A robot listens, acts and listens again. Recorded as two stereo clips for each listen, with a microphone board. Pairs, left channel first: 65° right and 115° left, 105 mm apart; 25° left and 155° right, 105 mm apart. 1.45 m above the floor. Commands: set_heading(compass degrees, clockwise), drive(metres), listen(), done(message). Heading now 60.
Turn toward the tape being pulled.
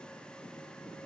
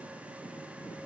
listen()
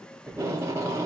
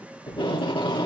set_heading(5)
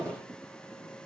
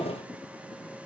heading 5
set_heading(355)
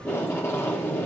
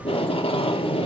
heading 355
done("Facing the tape being pulled, 2 to 4 m away.")